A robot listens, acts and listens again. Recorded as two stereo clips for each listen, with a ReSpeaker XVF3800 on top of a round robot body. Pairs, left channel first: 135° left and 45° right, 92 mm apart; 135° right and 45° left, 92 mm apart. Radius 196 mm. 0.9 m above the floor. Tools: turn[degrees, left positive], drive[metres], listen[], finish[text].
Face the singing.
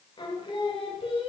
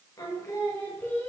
Thought: The singing: 155° left.
Action: turn[155]
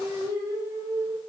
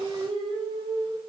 Thought: The singing is now 15° left.
Action: turn[15]
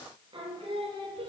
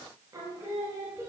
Thought: The singing is now 20° right.
Action: turn[-20]
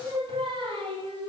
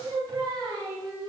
Thought: The singing is now 10° right.
Action: turn[-10]
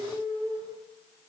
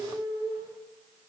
Action: finish[Facing the singing, 2 to 4 m away.]